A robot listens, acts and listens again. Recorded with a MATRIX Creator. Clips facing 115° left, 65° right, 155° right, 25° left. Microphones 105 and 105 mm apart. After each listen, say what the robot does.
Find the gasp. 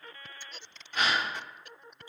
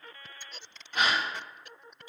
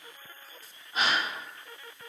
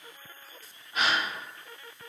Turn 100° right.
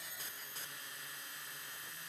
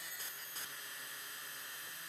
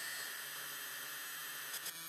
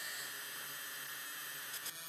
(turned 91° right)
Turn 10° right.
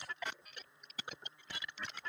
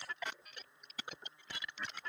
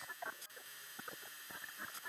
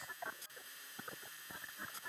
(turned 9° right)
Facing where the gasp came from. I can't hear it now.